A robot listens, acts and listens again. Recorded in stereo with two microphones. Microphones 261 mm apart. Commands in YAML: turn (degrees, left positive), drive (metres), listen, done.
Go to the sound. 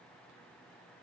listen: true
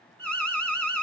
turn: 30
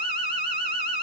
turn: 145
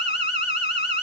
turn: 40
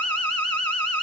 drive: 1.0
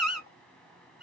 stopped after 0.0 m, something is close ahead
done: "Something is in my way. I am facing the alarm but have not reached it."